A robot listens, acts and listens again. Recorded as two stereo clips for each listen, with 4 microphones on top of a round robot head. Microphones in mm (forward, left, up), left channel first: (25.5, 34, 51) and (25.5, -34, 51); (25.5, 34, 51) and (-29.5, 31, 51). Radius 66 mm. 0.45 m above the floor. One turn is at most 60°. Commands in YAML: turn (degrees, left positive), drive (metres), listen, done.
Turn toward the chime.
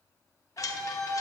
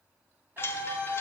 turn: 50
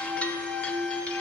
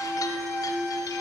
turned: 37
turn: 15
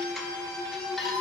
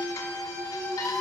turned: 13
listen: true
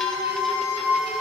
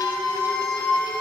done: "I heard a chime from this way, but can't make it out now."